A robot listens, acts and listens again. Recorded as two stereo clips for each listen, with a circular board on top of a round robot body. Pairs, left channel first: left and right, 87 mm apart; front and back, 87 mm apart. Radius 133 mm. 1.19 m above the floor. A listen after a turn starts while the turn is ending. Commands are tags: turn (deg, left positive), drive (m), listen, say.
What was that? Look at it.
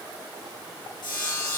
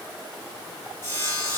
<turn deg="55"/>
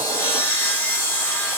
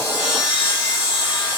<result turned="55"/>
<turn deg="25"/>
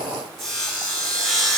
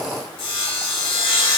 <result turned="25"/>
<say>Facing the sawing, 2 to 4 m away.</say>